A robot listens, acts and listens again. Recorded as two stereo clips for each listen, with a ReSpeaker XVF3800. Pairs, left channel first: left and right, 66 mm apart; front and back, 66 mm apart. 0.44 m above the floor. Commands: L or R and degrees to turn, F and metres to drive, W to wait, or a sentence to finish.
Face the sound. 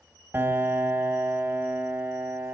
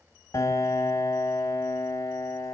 R35
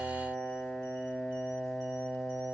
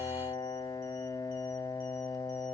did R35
L10
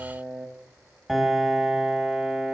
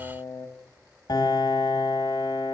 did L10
Found it: a piano, straight ahead.